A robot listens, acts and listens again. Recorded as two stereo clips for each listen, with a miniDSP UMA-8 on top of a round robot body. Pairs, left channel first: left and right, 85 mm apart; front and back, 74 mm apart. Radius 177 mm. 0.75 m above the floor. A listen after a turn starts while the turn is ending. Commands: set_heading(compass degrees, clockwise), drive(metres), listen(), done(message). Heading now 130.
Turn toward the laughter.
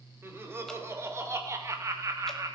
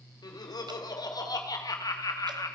set_heading(170)
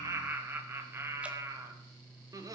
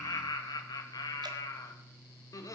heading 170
set_heading(215)
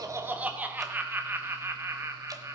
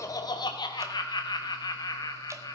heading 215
set_heading(250)
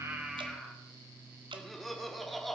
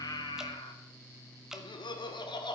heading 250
done("Facing the laughter, 2 to 4 m away.")